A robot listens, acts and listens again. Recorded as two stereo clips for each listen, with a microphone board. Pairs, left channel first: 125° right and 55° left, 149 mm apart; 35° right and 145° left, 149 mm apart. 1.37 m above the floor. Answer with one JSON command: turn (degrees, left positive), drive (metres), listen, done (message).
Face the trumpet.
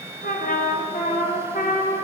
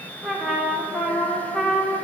{"turn": -120}
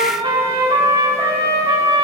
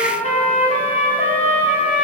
{"done": "Facing the trumpet."}